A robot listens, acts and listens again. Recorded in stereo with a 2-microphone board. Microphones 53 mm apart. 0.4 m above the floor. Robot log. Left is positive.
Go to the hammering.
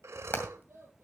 note: The hammering: about 40° left or 140° left.
cmd yaw +40
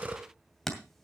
cmd fwd 1.0
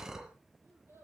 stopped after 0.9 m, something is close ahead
cmd idle
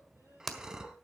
end: Arrived at the hammering, straight ahead.